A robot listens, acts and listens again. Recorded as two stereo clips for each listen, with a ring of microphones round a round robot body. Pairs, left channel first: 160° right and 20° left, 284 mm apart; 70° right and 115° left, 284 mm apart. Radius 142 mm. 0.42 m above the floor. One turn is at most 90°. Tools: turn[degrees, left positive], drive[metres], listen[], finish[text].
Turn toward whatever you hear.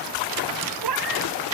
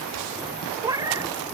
Thought: The cat meowing: 35° left.
Action: turn[35]
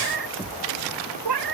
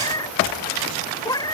Thought: The cat meowing is now 10° left.
Action: turn[10]
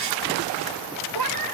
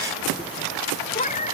Action: finish[Found it: a cat meowing, straight ahead.]